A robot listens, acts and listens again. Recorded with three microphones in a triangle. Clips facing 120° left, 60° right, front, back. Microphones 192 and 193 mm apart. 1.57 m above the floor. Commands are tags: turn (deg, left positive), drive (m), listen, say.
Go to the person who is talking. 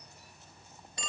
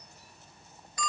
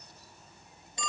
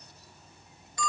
<listen/>
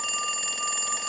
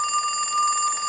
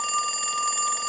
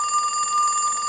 <listen/>
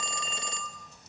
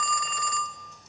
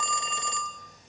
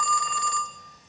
<say>I can't make out anyone speaking to turn to.</say>